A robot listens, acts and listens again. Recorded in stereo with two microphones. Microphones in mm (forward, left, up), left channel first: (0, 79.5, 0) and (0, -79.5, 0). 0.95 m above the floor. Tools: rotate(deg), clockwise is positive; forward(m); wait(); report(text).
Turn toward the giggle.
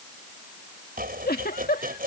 rotate(-70)
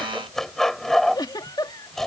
rotate(-30)
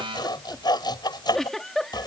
report("Facing the giggle.")